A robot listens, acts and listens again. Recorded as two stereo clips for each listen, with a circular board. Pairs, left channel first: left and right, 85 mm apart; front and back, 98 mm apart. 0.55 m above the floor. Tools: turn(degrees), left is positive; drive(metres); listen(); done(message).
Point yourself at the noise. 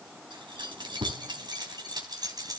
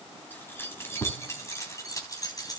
turn(degrees=-50)
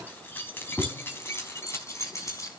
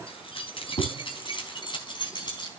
turn(degrees=40)
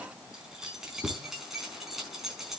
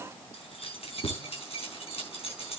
done("Found it: keys jangling, straight ahead.")